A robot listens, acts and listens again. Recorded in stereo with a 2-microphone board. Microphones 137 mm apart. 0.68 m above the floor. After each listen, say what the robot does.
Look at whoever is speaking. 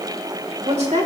Turn 55° right.
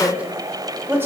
Turn 15° right.
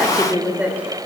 Turn 10° right.
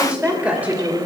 Turn 15° right.
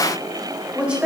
Turn 10° right.
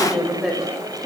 Found it: a woman speaking, straight ahead.